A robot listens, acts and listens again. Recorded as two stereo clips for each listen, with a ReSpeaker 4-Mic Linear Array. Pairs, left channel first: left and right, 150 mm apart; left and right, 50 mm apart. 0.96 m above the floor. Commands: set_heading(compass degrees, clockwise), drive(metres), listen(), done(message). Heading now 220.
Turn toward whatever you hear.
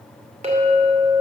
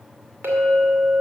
set_heading(265)
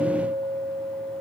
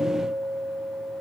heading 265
set_heading(355)
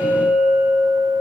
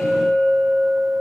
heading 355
set_heading(10)
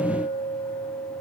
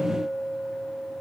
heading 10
done("Found it: a clink, straight ahead, 2 to 4 m away.")